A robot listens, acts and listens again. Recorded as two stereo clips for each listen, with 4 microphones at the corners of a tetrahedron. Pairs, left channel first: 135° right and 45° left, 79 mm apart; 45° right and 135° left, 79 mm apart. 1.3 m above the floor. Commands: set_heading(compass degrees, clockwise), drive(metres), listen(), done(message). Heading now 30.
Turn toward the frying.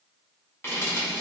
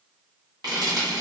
set_heading(220)
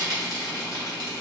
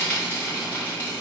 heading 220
set_heading(195)
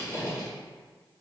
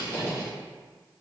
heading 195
done("Found it: frying, straight ahead.")